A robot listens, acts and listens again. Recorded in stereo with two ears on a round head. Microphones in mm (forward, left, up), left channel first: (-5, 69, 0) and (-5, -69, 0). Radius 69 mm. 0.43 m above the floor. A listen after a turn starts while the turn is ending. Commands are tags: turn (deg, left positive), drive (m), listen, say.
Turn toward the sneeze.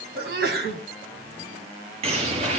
<turn deg="-70"/>
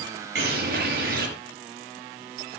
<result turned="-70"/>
<listen/>
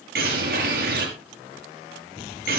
<say>I heard a sneeze, but can't make it out now. It was about straight ahead or 40° right.</say>